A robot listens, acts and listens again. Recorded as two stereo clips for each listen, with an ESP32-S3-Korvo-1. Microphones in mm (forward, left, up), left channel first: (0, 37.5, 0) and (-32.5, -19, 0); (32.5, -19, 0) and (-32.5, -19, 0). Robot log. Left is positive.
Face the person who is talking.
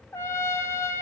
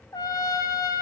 cmd idle
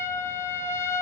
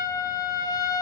cmd idle
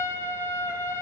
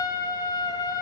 end: I can't make out anyone speaking to turn to.